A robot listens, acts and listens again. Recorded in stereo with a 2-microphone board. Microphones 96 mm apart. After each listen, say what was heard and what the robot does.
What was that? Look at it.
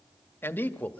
The man speaking: about 15° left or 165° left. Turn 15° left.
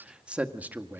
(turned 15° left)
So it is at 20° right. Turn 20° right.
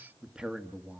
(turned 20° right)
The man speaking is now 15° right. Turn 15° right.
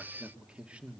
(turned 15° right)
The man speaking is now 15° right. Turn 15° right.
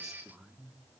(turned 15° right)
The man speaking is now 10° right. Turn 10° right.
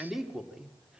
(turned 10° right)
Found it: a man speaking, straight ahead, 2 to 4 m away.